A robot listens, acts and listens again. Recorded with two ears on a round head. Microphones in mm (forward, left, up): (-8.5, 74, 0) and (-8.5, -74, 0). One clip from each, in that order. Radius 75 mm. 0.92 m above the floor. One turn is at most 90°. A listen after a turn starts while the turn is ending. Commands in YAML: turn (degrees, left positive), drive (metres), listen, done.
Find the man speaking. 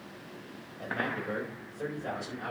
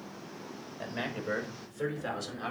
turn: -45
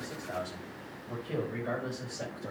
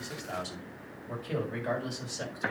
turn: -90
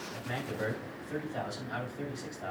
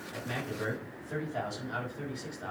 done: "Facing the man speaking, over 4 m away."